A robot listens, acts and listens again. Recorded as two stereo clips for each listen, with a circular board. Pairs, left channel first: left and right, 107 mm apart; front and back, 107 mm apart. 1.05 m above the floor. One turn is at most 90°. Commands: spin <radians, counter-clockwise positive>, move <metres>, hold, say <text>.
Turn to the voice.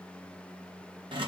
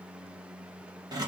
hold
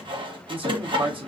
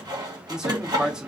spin -1.57
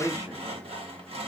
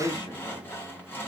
spin -0.70
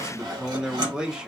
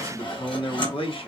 spin -0.17
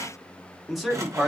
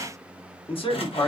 say Facing the man speaking, under 1 m away.